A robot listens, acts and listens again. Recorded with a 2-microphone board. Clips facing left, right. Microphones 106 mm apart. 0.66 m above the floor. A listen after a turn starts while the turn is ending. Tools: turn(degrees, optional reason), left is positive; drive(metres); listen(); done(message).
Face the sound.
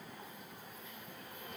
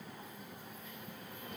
listen()
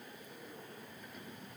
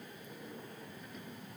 listen()
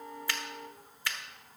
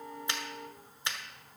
turn(degrees=-25, reason="The finger snap: about 25° right or 155° right.")
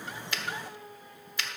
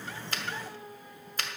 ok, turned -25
turn(degrees=-135, reason="So it is at 135° right.")
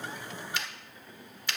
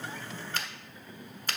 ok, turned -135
turn(degrees=-50, reason="The finger snap is now 50° right.")
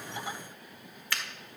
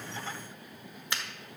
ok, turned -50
turn(degrees=-25, reason="The finger snap is now 25° right.")
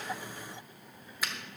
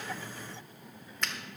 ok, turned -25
done("Found it: a finger snap, straight ahead.")